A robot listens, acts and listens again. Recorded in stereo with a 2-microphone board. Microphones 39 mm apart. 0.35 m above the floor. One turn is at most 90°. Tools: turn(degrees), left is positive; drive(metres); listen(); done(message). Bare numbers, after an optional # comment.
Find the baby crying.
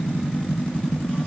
listen()
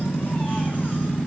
listen()
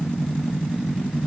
done("I can't make out a baby crying.")